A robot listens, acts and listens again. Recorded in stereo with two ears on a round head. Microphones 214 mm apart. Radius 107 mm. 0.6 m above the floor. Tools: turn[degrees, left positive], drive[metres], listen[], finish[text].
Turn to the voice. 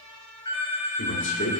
Thought: The man speaking: about 55° left or 125° left.
Action: turn[55]
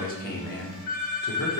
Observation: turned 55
Thought: So it is at 55° left.
Action: turn[55]
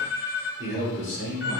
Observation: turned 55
Thought: The man speaking is now 50° left.
Action: turn[50]
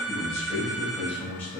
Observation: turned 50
Action: finish[Found it: a man speaking, straight ahead, 2 to 4 m away.]